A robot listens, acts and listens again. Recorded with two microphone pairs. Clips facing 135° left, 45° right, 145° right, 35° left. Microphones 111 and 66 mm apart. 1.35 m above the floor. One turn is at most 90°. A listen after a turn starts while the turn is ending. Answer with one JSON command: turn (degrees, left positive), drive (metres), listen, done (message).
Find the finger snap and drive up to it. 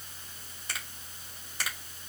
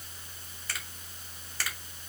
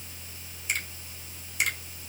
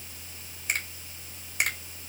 {"turn": 70}
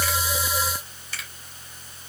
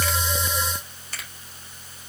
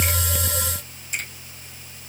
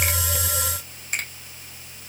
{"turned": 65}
{"drive": 1.0}
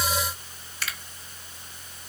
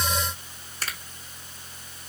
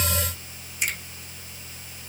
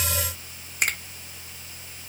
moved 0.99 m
{"drive": 1.0}
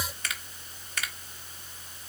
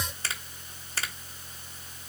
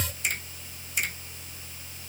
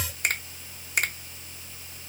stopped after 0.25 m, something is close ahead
{"turn": 10}
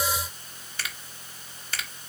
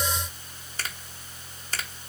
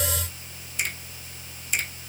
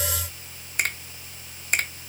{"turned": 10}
{"done": "I am next to the finger snap."}